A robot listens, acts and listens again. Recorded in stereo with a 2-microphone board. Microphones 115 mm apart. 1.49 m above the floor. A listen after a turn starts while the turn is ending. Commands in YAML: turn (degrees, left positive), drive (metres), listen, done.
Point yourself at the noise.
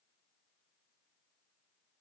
listen: true
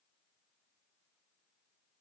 listen: true
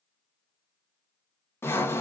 turn: 20
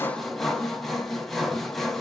done: "Facing the sawing."